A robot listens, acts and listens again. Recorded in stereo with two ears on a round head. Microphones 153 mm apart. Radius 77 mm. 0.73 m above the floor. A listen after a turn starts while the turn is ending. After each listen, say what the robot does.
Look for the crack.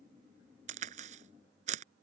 Turn 45° right.
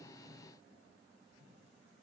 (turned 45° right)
Keep listening.
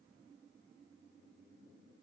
I heard a crack, but can't make it out now. It was about straight ahead or 90° right.